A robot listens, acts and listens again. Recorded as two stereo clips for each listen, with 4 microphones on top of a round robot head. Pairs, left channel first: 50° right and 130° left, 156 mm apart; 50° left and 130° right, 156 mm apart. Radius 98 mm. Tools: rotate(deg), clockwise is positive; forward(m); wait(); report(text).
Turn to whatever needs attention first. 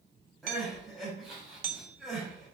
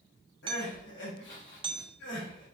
rotate(-40)
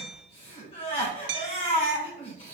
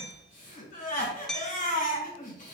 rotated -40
report("Facing the crying.")